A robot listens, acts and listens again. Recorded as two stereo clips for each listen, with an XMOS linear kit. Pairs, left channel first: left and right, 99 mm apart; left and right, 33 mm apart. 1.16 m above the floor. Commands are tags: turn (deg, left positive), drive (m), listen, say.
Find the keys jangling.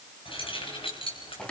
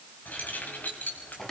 <turn deg="70"/>
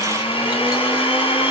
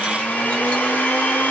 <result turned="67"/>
<listen/>
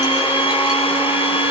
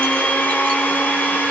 <listen/>
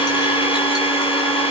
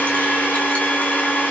<say>I heard keys jangling, but can't make it out now. It was about 5° left or 45° left.</say>